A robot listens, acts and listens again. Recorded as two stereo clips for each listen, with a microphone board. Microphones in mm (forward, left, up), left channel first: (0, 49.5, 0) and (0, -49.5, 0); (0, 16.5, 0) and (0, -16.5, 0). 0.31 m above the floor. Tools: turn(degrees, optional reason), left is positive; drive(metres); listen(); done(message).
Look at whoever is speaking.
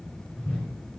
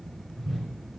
listen()
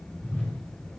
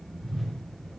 listen()
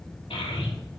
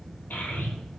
turn(degrees=70, reason="The child speaking: about 70° left or 110° left.")
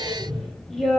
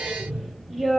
done("Found it: a child speaking, straight ahead.")